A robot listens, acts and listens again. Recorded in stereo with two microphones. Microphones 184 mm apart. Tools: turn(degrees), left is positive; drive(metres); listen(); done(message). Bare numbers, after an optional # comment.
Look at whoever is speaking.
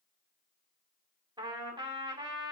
listen()
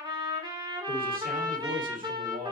# The man speaking: about 45° right or 135° right.
turn(-45)
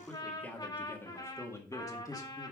# So it is at 20° left.
turn(20)
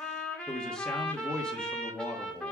done("Found it: a man speaking, straight ahead.")